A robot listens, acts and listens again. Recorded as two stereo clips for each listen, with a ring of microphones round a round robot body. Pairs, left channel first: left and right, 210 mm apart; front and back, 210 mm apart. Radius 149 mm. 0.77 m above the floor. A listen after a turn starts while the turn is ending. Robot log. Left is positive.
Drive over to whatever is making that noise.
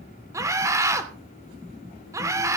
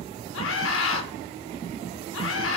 note: The scream: 15° right.
cmd yaw -15
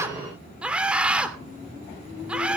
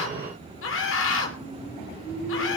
cmd fwd 1.0
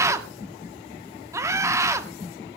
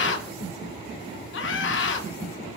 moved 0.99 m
note: The scream is now 15° right.
cmd yaw -15
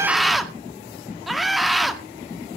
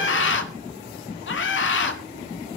cmd fwd 1.0
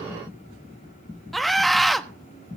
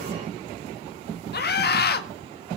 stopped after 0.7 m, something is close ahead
end: I am next to the scream.